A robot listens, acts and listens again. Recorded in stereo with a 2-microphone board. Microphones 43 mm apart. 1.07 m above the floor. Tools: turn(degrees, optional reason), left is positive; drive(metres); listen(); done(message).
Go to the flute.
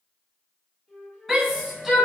turn(degrees=30)
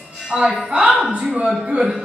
listen()
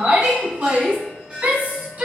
listen()
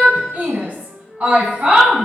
turn(degrees=150, reason="So it is at 150° left.")
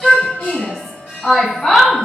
listen()
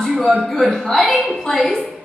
listen()
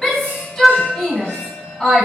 done("I heard a flute from this way, but can't make it out now. I did not reach it.")